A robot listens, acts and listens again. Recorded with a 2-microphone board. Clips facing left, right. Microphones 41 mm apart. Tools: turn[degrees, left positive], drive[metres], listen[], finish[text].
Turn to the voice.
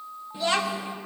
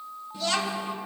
Thought: The child speaking: about 25° left or 155° left.
Action: turn[25]
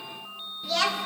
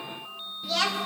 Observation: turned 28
Action: finish[Facing the child speaking.]